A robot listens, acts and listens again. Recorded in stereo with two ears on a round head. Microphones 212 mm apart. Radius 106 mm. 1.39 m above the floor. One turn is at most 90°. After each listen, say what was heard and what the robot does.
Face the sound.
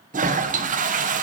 The toilet flushing: about 35° right or 145° right. Turn 35° right.
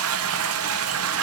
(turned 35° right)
So it is at 110° right. Turn 90° right.
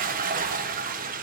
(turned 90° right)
The toilet flushing is now 35° right. Turn 35° right.
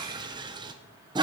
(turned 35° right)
The toilet flushing is now 20° right. Turn 20° right.
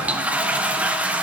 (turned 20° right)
Found it: a toilet flushing, straight ahead, under 1 m away.